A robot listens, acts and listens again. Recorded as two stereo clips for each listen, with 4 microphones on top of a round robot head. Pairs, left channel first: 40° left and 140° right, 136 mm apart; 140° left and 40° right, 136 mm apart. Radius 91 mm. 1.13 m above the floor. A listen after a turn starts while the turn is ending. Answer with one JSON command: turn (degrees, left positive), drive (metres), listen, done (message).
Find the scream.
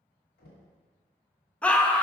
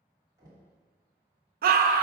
{"turn": -45}
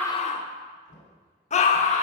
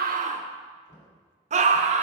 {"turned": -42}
{"done": "Facing the scream, under 1 m away."}